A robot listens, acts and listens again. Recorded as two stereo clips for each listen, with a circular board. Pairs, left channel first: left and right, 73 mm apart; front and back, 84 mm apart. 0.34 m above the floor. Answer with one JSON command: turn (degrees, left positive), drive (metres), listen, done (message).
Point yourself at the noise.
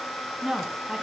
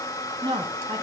{"turn": 180}
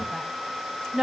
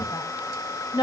{"turn": -10}
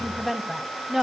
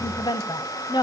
{"done": "Found it: a woman speaking, straight ahead."}